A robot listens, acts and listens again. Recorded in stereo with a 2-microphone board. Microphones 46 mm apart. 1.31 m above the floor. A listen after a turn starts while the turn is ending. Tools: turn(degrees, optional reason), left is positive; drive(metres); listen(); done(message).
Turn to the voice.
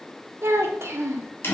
turn(degrees=-75, reason="The child speaking: about 75° right or 105° right.")
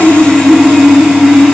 listen()
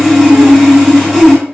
listen()
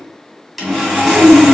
done("I heard a child speaking, but can't make it out now. It was about straight ahead or 30° right.")